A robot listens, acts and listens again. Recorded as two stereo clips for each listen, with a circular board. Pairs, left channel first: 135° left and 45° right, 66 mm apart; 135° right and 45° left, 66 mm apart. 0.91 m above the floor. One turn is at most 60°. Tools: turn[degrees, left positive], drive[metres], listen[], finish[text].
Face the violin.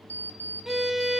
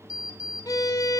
Thought: The violin: 130° right.
Action: turn[-60]
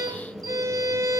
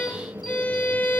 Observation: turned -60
Thought: The violin is now 70° right.
Action: turn[-60]
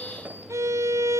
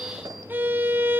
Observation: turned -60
Thought: The violin is now 10° right.
Action: turn[-10]
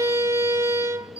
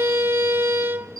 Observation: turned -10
Action: finish[Found it: a violin, straight ahead.]